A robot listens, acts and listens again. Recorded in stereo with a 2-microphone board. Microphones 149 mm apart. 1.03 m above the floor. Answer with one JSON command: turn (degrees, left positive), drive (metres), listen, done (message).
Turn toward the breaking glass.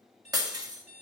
{"turn": -25}
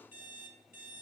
{"listen": true}
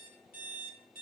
{"done": "I heard breaking glass, but can't make it out now. It was about straight ahead or 130° right."}